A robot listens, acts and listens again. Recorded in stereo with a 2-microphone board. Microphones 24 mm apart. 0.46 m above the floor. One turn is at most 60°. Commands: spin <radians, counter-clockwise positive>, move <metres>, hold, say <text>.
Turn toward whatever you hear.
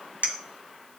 spin -1.05
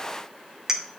spin -0.35
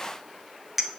say Found it: a clink, straight ahead, 1 to 2 m away.